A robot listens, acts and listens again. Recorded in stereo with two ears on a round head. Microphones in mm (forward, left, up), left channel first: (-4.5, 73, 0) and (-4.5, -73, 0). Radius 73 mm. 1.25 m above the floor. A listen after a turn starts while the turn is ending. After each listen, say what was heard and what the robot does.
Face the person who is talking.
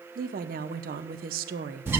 The woman speaking: about 60° right or 120° right. Turn 60° right.
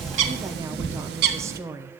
So it is at 20° right. Turn 20° right.
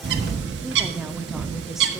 Keep listening.
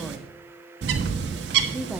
Keep listening.
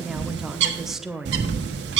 Facing the woman speaking, under 1 m away.